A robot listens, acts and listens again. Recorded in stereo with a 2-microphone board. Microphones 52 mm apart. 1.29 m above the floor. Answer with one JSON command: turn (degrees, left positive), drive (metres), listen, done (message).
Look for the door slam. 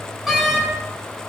{"turn": -30}
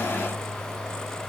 {"listen": true}
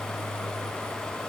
{"done": "I heard a door slam, but can't make it out now. It was about 20° left or 140° right."}